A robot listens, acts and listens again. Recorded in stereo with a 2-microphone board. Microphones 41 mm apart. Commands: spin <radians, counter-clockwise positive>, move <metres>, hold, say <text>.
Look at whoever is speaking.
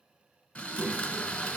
spin 0.44
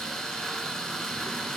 hold
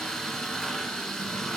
hold
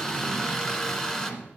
spin 1.92
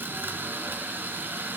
hold
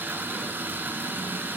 spin 0.52
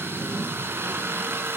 say Facing the child speaking.